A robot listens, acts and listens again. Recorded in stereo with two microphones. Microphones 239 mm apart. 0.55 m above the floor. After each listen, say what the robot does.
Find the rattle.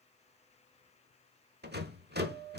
Turn 45° right.
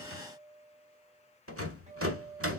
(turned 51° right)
Turn 85° right.
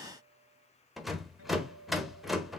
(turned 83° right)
Facing the rattle, 1 to 2 m away.